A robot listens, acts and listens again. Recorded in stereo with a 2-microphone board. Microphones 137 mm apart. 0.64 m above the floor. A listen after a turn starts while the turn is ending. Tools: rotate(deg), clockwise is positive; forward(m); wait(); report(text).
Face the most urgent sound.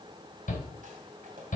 rotate(-75)
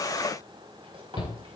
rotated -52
rotate(-45)
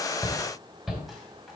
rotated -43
report("Facing the shout.")